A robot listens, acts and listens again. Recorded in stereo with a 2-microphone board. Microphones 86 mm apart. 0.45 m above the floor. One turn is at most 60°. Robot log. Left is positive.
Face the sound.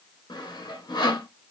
note: The sawing: about 55° left or 125° left.
cmd yaw +55
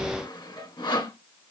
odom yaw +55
note: So it is at 65° left.
cmd yaw +60
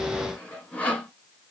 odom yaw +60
note: The sawing is now 15° left.
cmd yaw +15
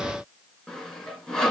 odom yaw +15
end: Found it: sawing, straight ahead, 1 to 2 m away.